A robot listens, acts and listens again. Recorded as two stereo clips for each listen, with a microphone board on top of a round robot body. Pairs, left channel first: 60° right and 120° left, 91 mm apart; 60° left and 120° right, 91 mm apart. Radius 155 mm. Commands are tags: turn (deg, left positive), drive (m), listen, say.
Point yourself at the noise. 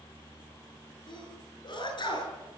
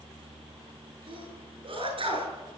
<turn deg="-95"/>
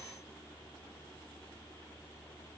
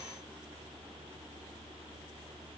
<say>I heard a sneeze from this way, but can't make it out now.</say>